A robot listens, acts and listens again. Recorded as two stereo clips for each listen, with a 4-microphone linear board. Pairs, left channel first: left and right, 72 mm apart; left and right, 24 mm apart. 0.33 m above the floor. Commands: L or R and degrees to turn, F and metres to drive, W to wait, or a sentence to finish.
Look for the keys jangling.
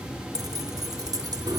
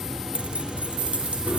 R70
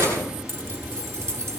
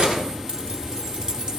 R40
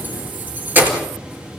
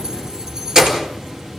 R20
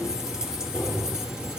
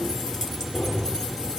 R10
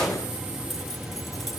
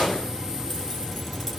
Facing the keys jangling.